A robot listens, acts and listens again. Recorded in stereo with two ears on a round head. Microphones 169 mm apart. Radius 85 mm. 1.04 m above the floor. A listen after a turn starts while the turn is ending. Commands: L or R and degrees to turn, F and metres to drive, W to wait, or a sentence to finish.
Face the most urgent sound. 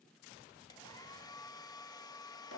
W
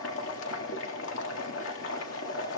W
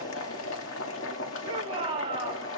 R30
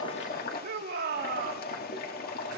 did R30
R120
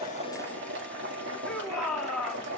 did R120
Facing the shout.